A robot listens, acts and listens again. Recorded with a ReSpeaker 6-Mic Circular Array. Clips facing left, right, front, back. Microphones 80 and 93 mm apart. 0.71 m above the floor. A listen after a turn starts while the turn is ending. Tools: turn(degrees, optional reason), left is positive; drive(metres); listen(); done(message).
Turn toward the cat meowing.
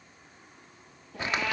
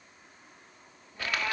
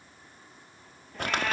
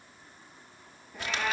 turn(degrees=100, reason="The cat meowing: 100° left.")
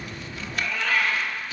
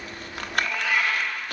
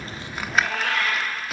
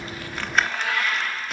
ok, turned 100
turn(degrees=-10, reason="The cat meowing is now 10° right.")
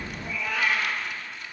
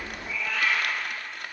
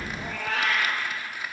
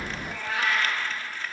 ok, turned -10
done("Facing the cat meowing, over 4 m away.")